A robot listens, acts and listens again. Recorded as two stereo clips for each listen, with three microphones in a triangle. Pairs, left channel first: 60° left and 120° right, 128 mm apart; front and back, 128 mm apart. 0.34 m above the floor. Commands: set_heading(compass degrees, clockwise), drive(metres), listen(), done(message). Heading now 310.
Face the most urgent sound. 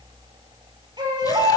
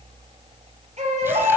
set_heading(120)
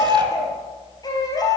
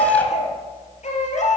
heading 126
done("Found it: a baby crying, straight ahead, 2 to 4 m away.")